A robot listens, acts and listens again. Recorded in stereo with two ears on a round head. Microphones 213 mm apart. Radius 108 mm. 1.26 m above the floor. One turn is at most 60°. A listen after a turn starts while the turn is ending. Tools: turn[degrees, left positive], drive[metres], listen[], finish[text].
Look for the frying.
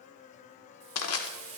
Thought: The frying: about 30° right or 150° right.
Action: turn[-30]
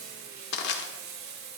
Thought: So it is at 115° right.
Action: turn[-60]
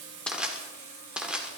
Thought: The frying is now 60° right.
Action: turn[-60]
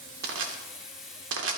Action: finish[Facing the frying, over 4 m away.]